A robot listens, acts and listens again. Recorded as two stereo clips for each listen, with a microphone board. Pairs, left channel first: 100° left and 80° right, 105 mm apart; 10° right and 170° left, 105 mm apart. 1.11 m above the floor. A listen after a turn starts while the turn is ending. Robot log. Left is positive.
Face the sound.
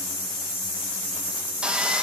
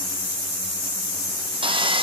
note: The sawing: 155° right.
cmd yaw -155
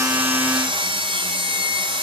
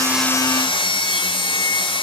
note: The sawing is now 45° right.
cmd yaw -45
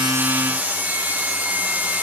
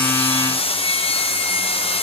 end: Found it: sawing, straight ahead, under 1 m away.